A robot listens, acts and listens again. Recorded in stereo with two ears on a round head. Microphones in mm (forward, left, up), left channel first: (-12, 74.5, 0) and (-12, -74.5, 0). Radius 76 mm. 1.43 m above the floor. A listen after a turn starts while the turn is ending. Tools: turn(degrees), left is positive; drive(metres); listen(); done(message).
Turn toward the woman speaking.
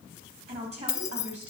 turn(degrees=-40)
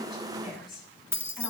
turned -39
done("Found it: a woman speaking, straight ahead.")